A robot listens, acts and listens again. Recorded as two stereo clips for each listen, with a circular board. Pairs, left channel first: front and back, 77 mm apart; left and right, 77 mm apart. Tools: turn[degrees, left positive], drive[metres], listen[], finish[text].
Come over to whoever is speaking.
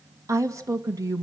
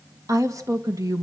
Thought: The woman speaking: 135° right.
Action: turn[-135]
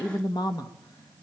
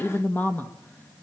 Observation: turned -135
Thought: The woman speaking is now 25° left.
Action: turn[25]
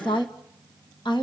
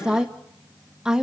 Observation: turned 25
Thought: The woman speaking is now 10° right.
Action: turn[-10]
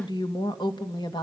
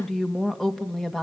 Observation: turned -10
Action: drive[1.0]
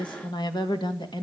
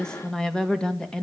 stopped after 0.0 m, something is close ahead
Thought: The woman speaking is now 10° left.
Action: turn[10]
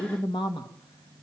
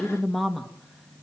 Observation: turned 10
Action: finish[Blocked. The woman speaking is further on, straight ahead.]